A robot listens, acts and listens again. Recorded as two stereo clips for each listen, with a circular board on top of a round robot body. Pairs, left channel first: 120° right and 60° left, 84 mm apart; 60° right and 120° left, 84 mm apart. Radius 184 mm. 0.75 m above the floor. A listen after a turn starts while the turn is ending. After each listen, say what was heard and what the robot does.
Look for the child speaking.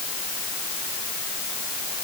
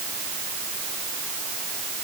Keep listening.
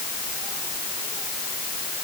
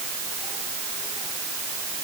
Keep listening.
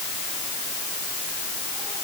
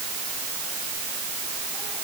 I can't make out a child speaking.